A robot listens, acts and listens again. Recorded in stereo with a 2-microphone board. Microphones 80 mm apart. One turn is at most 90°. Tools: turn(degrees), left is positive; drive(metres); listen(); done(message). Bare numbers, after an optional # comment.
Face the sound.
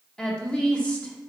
# The woman speaking: about 15° left or 165° left.
turn(15)
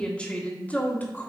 # The woman speaking: about 25° left or 155° left.
turn(25)
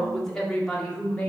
turn(30)
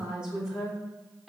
done("Found it: a woman speaking, straight ahead, 2 to 4 m away.")